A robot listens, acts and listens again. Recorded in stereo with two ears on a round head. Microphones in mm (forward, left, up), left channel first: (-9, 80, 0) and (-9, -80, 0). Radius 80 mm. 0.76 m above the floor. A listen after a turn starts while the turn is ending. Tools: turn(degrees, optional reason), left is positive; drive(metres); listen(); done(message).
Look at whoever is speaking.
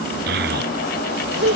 turn(degrees=-60, reason="The child speaking: about 60° right or 120° right.")
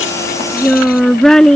done("Facing the child speaking.")